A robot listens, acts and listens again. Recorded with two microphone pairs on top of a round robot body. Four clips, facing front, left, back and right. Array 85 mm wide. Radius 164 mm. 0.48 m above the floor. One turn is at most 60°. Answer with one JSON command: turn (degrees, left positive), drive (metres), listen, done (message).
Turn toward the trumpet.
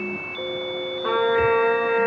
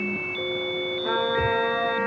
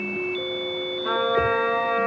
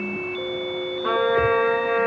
{"turn": -35}
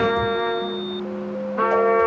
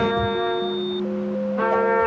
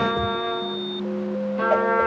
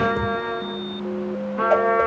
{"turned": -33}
{"done": "Facing the trumpet."}